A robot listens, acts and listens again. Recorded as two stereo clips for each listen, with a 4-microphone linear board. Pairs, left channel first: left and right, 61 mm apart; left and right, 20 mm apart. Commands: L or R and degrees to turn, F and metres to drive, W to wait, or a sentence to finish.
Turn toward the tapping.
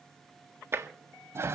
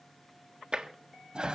R45
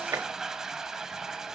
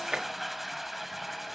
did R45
R90
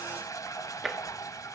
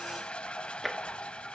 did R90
Facing the tapping, 1 to 2 m away.